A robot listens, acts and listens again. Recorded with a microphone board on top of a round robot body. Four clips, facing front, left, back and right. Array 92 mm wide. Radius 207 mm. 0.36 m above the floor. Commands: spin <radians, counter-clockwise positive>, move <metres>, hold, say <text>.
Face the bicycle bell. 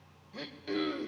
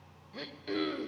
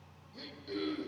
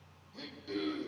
hold
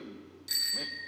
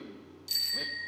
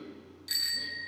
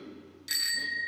spin -1.66
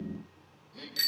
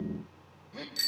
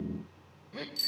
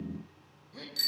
spin 0.26
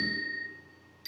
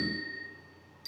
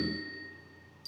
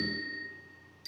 say Found it: a bicycle bell, straight ahead, 2 to 4 m away.